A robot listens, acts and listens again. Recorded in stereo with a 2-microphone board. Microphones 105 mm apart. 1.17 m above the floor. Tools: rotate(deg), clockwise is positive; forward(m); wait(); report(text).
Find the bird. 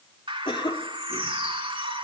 rotate(60)
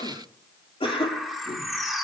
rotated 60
report("Facing the bird.")